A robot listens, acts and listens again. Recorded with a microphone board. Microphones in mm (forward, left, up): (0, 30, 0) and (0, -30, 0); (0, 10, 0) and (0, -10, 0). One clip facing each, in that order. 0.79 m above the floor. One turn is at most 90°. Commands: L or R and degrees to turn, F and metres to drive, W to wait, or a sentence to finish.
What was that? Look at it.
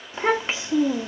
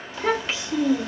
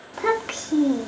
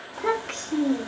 L25
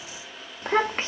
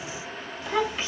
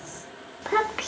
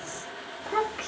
L90
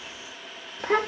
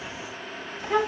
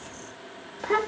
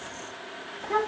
L60
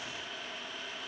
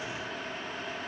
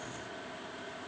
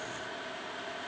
W
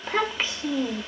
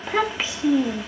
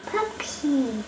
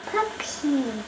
Facing the child speaking, under 1 m away.